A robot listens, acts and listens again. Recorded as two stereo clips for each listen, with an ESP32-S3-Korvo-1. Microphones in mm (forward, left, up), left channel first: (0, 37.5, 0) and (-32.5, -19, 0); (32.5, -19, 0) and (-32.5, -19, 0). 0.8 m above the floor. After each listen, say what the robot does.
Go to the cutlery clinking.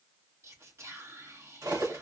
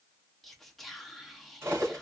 Turn 135° right.
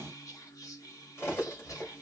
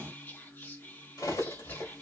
Turn 10° left.
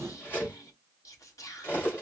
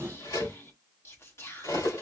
Drive 1.0 m forward.
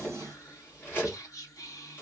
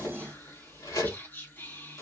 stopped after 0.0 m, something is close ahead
Blocked. The cutlery clinking is further on, straight ahead.